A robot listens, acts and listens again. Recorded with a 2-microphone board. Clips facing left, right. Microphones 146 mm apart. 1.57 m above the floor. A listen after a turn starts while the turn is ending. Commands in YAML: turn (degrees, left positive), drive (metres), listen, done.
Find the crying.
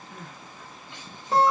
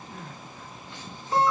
turn: 15
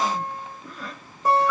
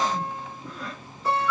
done: "Found it: crying, straight ahead, 1 to 2 m away."